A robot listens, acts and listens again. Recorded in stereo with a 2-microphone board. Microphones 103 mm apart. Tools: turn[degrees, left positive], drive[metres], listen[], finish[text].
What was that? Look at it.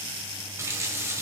Thought: The running tap: about 30° right or 150° right.
Action: turn[-30]
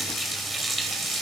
Action: finish[Found it: a running tap, straight ahead.]